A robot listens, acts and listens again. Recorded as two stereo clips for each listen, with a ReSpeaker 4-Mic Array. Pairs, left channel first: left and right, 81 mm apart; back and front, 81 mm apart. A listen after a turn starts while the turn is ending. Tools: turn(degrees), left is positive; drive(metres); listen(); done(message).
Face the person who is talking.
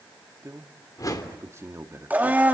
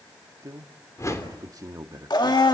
turn(degrees=-40)
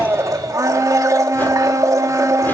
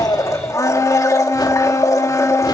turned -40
listen()
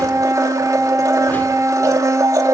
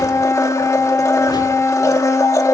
listen()
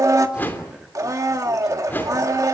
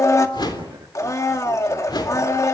done("I heard a man speaking from this way, but can't make it out now.")